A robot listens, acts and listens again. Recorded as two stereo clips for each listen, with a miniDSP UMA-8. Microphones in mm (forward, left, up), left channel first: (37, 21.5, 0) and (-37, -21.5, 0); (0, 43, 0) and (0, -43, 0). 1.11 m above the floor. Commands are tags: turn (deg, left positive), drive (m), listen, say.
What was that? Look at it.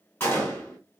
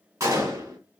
<turn deg="-35"/>
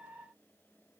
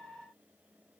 <say>I heard a gunshot from this way, but can't make it out now.</say>